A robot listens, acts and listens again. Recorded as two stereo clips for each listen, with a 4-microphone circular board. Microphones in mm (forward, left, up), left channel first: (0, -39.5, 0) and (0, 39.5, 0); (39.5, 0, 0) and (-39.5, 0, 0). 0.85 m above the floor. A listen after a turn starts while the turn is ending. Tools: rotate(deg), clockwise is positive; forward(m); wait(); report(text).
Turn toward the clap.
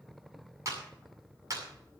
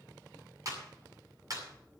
rotate(-135)
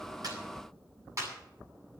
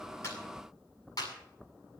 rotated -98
rotate(-40)
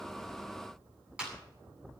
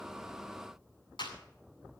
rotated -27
rotate(-10)
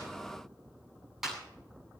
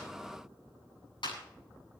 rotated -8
report("Found it: a clap, straight ahead.")